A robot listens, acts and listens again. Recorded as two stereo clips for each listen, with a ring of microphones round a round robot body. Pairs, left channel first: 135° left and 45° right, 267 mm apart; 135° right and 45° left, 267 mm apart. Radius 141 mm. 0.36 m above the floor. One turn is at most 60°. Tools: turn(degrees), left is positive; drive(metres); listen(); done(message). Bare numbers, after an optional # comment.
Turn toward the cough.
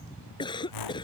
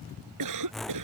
# The cough: 60° left.
turn(60)
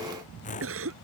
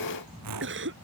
done("Facing the cough.")